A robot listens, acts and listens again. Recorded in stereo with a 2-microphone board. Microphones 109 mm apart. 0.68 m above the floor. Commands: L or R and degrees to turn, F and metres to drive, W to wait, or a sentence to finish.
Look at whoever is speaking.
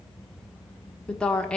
L30
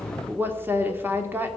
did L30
R20
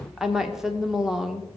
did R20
Facing the woman speaking, 1 to 2 m away.